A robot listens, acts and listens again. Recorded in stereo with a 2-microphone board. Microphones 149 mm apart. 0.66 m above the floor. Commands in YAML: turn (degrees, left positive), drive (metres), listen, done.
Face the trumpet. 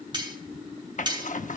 listen: true
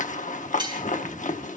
listen: true
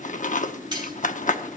done: "I can't make out a trumpet, only cutlery clinking and a zipper."